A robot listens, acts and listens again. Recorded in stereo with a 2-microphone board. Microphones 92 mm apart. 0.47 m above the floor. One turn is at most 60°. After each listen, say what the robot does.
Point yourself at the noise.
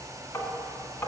Turn 30° left.
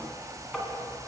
Found it: tapping, straight ahead.